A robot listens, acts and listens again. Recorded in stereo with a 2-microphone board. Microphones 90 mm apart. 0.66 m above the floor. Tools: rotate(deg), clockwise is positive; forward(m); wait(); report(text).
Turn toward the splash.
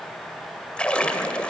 rotate(-30)
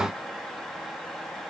wait()
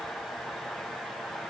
report("I heard a splash, but can't make it out now. It was about 20° right or 140° left.")